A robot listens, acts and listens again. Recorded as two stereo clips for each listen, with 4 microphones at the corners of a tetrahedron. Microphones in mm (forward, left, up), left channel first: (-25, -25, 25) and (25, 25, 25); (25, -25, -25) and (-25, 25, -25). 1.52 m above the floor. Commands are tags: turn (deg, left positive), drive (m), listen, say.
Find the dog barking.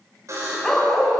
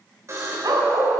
<turn deg="140"/>
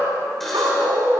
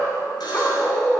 <turn deg="15"/>
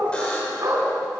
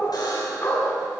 <say>Found it: a dog barking, straight ahead, over 4 m away.</say>